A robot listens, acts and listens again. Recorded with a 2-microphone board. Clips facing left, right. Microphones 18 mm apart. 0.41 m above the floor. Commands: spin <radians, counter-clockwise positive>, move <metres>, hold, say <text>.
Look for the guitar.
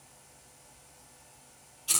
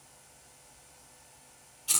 hold
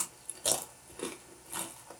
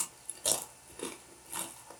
hold
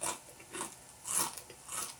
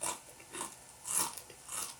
say I can't make out a guitar, only chewing.